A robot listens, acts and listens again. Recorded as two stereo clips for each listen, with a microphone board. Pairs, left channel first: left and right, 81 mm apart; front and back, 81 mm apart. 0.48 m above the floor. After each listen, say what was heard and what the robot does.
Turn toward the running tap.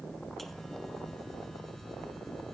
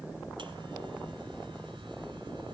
Keep listening.
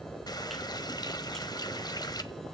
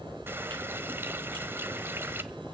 The running tap: 120° left. Turn 120° left.
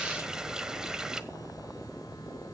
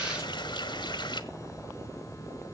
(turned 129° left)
The running tap is now 10° right. Turn 10° right.
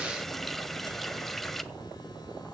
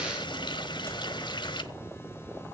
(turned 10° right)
Facing the running tap, 1 to 2 m away.